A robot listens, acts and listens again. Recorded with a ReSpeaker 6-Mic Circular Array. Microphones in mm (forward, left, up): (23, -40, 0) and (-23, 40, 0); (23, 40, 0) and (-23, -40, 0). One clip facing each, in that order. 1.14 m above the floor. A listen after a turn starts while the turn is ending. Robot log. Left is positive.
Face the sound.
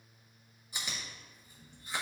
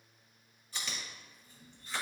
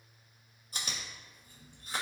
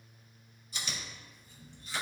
note: The chewing: 15° left.
cmd yaw +15
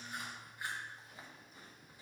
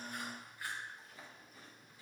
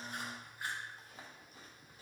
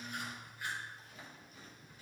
note: The chewing is now 10° left.
cmd yaw +10
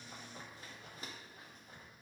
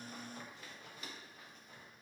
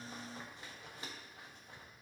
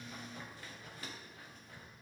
end: Found it: chewing, straight ahead.